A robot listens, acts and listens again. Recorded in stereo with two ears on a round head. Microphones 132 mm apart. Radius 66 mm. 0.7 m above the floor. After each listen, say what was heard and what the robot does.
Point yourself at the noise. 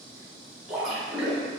Turn 30° right.
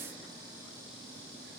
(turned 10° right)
Keep listening.
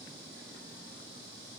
I heard a splash, but can't make it out now. It was about 5° left or 165° right.